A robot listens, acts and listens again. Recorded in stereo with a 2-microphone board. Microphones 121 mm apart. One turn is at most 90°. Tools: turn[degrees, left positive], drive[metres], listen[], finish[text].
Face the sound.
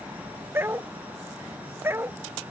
Thought: The dog barking: about 20° right or 160° right.
Action: turn[-20]
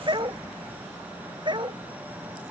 Thought: So it is at 140° right.
Action: turn[-90]
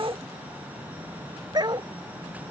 Thought: The dog barking is now 35° right.
Action: turn[-35]
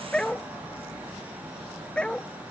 Action: finish[Found it: a dog barking, straight ahead.]